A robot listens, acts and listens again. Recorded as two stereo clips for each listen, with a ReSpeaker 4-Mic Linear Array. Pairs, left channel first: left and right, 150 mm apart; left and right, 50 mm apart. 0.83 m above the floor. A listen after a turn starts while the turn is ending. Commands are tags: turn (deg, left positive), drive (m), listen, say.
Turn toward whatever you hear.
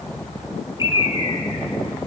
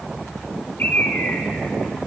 <turn deg="35"/>
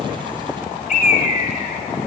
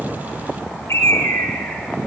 <turn deg="105"/>
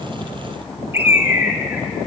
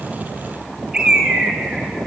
<turn deg="-15"/>
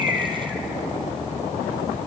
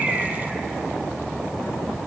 <listen/>
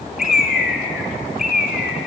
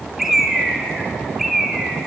<say>Found it: a bird, straight ahead, 2 to 4 m away.</say>